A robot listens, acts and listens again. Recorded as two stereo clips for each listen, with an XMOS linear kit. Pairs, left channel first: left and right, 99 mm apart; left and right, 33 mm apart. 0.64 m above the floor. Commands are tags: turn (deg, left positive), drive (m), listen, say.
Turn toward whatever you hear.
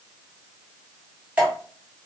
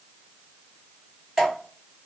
<turn deg="-15"/>
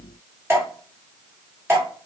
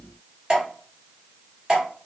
<turn deg="-155"/>
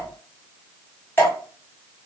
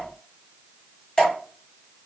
<turn deg="25"/>
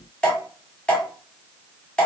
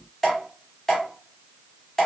<turn deg="15"/>
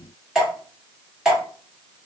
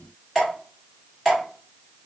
<say>Facing the dripping.</say>